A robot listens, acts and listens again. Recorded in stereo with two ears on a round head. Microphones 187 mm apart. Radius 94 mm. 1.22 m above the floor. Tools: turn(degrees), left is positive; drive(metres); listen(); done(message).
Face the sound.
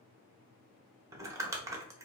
turn(degrees=-15)
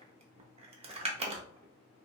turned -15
turn(degrees=-150)
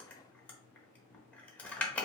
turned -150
done("Found it: crumpling, straight ahead.")